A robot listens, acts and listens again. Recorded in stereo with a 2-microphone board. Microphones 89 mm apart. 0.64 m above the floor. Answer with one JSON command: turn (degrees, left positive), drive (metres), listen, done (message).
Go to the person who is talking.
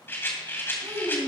{"turn": -60}
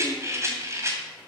{"listen": true}
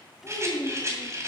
{"drive": 1.0}
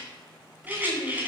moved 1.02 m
{"drive": 1.0}
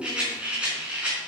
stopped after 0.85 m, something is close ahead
{"turn": -15}
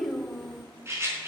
{"done": "I am next to the child speaking."}